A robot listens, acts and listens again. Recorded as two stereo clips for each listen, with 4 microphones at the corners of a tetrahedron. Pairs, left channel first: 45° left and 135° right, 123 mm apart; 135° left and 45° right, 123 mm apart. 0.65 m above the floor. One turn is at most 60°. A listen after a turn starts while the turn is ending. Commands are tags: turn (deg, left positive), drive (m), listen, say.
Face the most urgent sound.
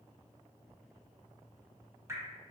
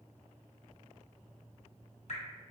<listen/>
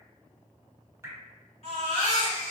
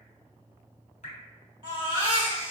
<say>Facing the baby crying, 1 to 2 m away.</say>